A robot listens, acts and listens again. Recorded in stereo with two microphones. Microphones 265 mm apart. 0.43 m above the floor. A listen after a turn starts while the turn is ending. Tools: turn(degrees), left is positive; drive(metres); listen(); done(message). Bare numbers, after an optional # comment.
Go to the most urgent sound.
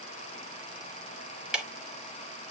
listen()
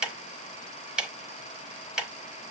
listen()
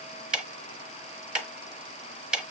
done("I can't make out anything urgent to turn to.")